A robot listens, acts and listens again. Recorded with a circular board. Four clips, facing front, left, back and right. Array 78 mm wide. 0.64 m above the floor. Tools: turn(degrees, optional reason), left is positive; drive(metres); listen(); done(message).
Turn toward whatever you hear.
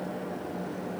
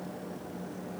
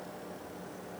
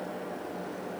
listen()
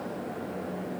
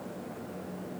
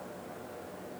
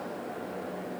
listen()
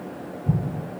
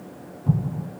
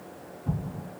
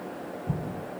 turn(degrees=85, reason="The explosion: 85° left.")
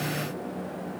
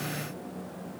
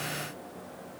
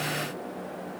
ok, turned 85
done("I heard an explosion from this way, but can't make it out now.")